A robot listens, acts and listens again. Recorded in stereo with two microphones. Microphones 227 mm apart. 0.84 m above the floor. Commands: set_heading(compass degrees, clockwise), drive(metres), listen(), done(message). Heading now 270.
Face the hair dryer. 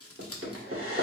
set_heading(0)
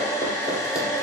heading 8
set_heading(358)
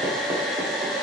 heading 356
done("Found it: a hair dryer, straight ahead, under 1 m away.")